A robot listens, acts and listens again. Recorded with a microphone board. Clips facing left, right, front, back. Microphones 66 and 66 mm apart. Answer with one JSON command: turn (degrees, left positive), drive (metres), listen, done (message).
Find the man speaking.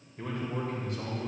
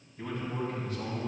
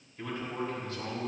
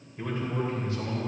{"turn": 110}
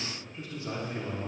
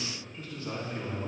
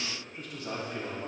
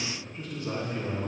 {"turn": 25}
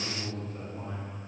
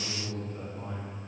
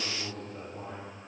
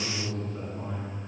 {"turn": 15}
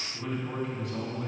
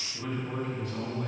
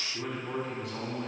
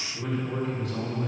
{"done": "Found it: a man speaking, straight ahead."}